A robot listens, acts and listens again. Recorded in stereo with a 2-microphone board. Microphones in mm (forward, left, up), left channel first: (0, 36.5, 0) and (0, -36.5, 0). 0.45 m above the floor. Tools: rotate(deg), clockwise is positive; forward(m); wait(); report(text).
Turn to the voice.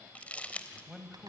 rotate(30)
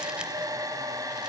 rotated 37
wait()
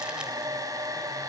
wait()
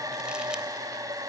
report("I heard a man speaking, but can't make it out now. It was about 35° left or 140° right.")